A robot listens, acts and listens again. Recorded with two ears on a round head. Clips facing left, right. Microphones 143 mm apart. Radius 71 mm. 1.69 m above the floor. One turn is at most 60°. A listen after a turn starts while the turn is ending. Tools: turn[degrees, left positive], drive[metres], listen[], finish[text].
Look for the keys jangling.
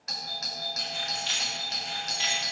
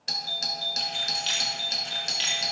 Thought: The keys jangling: about 35° right or 145° right.
Action: turn[-35]
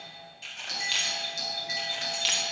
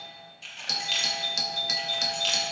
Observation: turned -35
Thought: So it is at 10° left.
Action: turn[10]
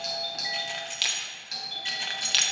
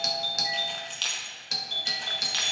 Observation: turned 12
Thought: The keys jangling is now 35° left.
Action: turn[35]
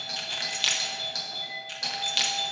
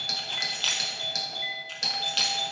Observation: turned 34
Thought: The keys jangling is now 15° left.
Action: turn[15]
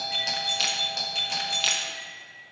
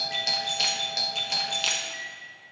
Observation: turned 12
Action: finish[Facing the keys jangling, 1 to 2 m away.]